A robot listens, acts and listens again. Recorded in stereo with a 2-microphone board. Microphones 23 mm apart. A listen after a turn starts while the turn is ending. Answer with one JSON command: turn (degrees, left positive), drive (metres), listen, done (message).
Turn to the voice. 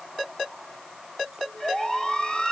{"listen": true}
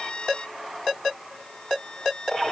{"listen": true}
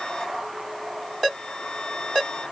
{"done": "I can't make out anyone speaking, only a violin."}